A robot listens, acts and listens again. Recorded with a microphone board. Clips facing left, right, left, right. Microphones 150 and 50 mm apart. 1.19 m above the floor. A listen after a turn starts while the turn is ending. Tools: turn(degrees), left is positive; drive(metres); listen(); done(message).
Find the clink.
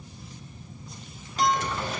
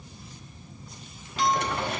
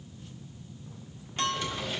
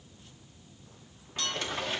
turn(degrees=45)
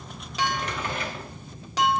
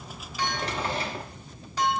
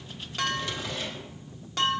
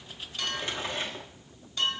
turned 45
turn(degrees=95)
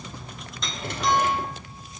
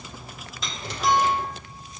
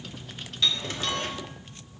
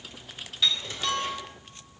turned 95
done("Found it: a clink, straight ahead, 1 to 2 m away.")